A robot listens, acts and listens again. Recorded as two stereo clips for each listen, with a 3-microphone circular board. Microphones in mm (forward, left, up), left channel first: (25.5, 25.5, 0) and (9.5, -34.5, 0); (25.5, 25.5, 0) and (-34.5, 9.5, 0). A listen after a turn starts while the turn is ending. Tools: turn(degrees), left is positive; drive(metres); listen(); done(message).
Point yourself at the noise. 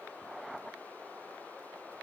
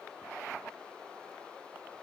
listen()
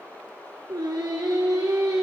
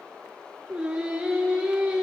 turn(degrees=-90)
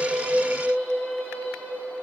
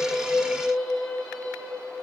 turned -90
turn(degrees=15)
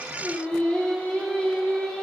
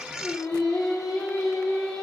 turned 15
done("Facing the singing.")